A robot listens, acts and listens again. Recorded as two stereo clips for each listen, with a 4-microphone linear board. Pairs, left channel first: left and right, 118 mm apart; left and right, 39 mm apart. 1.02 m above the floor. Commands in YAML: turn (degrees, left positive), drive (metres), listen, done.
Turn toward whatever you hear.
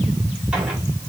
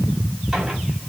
listen: true
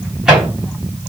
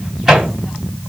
turn: -30
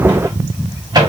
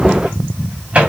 turn: -145
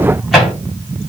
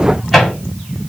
done: "Facing the microwave, 2 to 4 m away."